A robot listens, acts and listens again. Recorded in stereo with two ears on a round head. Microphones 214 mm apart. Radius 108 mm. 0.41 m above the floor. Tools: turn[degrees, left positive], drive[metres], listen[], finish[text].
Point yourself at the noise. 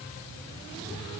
Action: listen[]
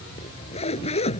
Thought: The zipper: about 25° left or 155° left.
Action: turn[25]
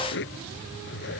Thought: So it is at 125° left.
Action: turn[125]
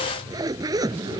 Thought: The zipper is now 15° right.
Action: turn[-15]
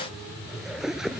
Action: finish[Found it: a zipper, straight ahead.]